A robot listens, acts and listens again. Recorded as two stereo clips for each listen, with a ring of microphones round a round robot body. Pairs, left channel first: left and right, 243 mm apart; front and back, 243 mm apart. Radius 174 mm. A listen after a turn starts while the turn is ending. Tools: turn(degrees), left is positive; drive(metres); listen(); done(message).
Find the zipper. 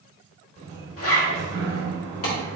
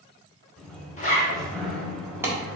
turn(degrees=60)
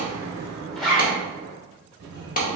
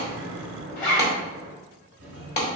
done("Found it: a zipper, straight ahead, 1 to 2 m away.")